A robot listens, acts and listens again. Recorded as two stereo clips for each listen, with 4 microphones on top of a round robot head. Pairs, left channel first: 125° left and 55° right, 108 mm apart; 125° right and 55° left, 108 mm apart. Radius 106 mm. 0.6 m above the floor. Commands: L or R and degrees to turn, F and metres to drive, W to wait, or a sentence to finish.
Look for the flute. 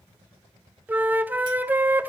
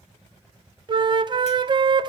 L15
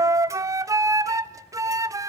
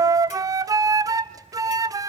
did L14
Facing the flute, 1 to 2 m away.